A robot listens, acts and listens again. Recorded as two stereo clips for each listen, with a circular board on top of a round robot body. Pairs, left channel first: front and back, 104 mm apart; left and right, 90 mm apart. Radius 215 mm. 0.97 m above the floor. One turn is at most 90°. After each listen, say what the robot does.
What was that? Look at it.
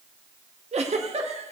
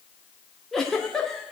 Turn 90° left.
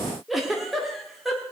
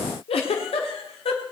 Turn 90° left.
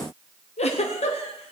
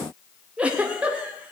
Turn 10° right.
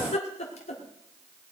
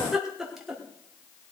Facing the giggle, 1 to 2 m away.